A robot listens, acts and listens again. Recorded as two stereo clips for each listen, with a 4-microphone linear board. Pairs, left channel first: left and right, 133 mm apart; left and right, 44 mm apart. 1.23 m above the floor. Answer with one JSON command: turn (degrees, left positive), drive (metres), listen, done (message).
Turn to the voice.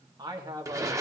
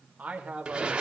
{"turn": -30}
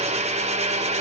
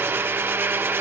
{"listen": true}
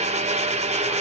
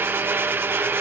{"listen": true}
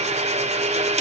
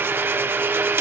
{"done": "I heard a man speaking, but can't make it out now. It was about straight ahead or 120° right."}